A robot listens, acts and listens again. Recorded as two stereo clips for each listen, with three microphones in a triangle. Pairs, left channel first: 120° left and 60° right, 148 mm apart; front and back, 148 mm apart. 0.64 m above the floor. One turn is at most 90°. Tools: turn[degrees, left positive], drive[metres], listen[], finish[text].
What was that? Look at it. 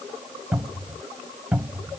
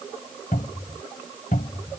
Thought: The cupboard door: 20° left.
Action: turn[20]
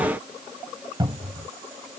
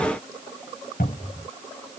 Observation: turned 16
Action: finish[Facing the cupboard door.]